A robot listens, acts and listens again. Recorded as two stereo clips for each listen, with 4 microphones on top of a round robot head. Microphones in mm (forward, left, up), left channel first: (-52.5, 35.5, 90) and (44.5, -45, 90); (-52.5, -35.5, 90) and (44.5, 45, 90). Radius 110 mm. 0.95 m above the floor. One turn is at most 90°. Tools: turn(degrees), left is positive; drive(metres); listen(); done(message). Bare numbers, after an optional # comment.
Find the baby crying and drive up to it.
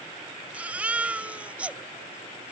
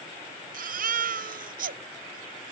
# The baby crying: 40° left.
turn(40)
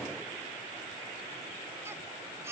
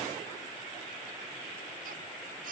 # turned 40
listen()
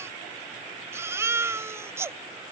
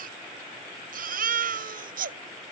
# The baby crying is now 30° left.
turn(30)
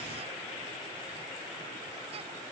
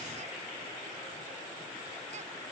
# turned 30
listen()
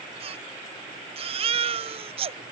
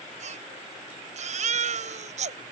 drive(1.0)
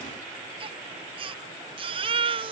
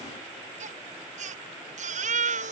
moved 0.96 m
# The baby crying is now 10° left.
turn(10)
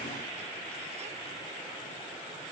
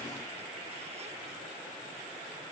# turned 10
listen()
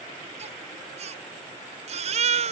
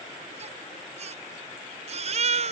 drive(1.0)
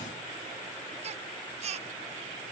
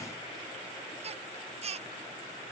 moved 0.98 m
drive(1.0)
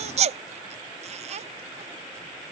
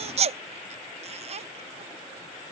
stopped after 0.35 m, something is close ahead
done("I am next to the baby crying.")